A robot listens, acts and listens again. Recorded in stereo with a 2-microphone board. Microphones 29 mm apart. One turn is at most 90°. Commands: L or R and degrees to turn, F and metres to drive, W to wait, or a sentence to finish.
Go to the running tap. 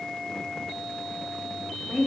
W
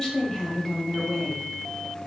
W
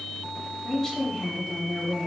I can't make out a running tap to turn to.